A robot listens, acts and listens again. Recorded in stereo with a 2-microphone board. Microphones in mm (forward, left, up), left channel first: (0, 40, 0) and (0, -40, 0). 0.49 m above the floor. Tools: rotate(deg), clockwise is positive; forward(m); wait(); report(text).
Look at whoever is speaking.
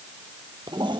wait()
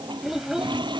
rotate(30)
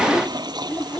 rotate(-10)
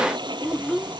report("Found it: a child speaking, straight ahead.")